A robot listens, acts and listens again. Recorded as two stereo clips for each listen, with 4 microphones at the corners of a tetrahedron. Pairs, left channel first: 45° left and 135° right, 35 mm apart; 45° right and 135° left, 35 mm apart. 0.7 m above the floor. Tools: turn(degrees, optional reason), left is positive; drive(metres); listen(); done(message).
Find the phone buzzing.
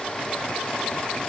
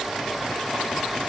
listen()
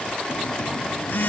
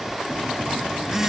turn(degrees=60, reason="The phone buzzing: 60° left.")
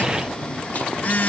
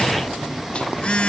turn(degrees=10, reason="The phone buzzing is now 10° left.")
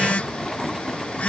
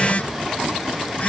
done("Found it: a phone buzzing, straight ahead.")